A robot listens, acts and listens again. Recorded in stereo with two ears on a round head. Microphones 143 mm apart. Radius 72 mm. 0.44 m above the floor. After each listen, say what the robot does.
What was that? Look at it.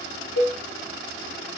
Turn 90° left.
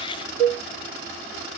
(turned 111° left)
Turn 30° right.
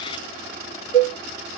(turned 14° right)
Turn 15° right.
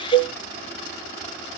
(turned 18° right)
Found it: a cowbell, straight ahead.